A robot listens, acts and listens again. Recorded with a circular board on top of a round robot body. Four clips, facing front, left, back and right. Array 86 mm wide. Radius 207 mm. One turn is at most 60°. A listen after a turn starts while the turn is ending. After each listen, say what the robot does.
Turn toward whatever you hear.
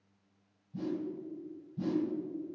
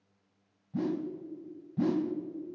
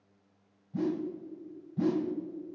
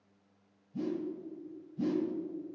Turn 60° left.
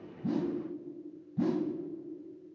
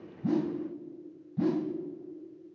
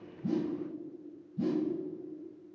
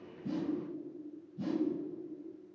Turn 45° left.
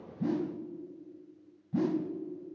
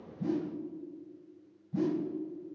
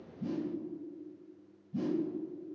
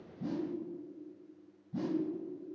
Facing the whoosh, under 1 m away.